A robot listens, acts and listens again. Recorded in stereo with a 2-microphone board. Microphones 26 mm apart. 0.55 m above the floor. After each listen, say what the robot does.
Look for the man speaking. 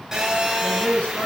Turn 65° left.
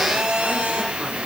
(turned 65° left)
Keep listening.
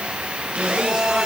Keep listening.
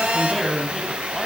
Found it: a man speaking, straight ahead.